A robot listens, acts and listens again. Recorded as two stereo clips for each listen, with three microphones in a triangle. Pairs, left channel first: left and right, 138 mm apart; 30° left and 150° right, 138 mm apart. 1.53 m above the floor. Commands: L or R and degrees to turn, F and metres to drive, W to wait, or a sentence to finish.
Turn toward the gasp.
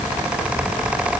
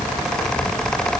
W
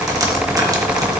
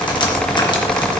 W
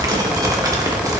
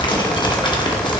I can't make out a gasp to turn to.